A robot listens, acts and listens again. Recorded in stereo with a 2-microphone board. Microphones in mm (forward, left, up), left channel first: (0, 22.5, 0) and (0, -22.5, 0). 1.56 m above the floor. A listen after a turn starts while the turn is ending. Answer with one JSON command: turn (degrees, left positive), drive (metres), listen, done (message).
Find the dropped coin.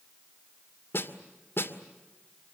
{"listen": true}
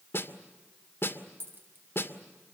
{"turn": -60}
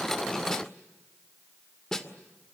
{"listen": true}
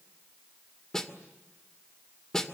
{"done": "I heard a dropped coin, but can't make it out now. It was about straight ahead or 60° right."}